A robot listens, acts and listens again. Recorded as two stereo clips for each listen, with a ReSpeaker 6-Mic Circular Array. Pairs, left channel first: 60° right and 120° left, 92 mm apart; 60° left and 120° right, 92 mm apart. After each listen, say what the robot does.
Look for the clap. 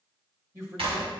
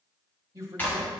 Turn 130° left.
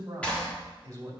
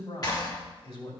Turn 15° left.
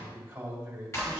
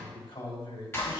Facing the clap.